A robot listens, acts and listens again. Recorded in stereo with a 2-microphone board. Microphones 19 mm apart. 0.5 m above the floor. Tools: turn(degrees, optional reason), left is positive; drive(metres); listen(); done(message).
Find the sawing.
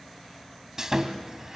turn(degrees=-25, reason="The sawing: about 25° right or 155° right.")
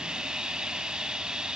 turn(degrees=-130, reason="So it is at 130° right.")
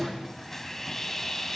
turn(degrees=15, reason="The sawing is now 15° left.")
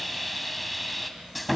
done("Facing the sawing, 2 to 4 m away.")